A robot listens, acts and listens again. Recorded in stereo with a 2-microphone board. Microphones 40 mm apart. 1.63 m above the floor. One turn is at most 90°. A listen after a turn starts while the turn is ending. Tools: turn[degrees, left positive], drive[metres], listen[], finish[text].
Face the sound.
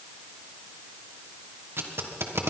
Action: turn[-90]
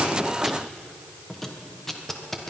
Action: finish[Found it: tape being pulled, straight ahead, 1 to 2 m away.]